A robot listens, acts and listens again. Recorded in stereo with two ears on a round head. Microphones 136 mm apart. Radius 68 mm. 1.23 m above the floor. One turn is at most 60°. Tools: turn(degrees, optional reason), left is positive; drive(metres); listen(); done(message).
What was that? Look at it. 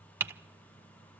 turn(degrees=-15, reason="The typing on a keyboard: about 15° right or 165° right.")
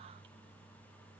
listen()
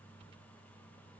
listen()
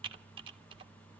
turn(degrees=-60, reason="So it is at 145° right.")
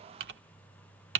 turn(degrees=-60, reason="The typing on a keyboard is now 95° right.")
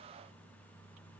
turn(degrees=-35, reason="Nothing new. It was at 35° right.")
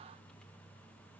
listen()
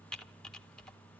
done("Facing the typing on a keyboard.")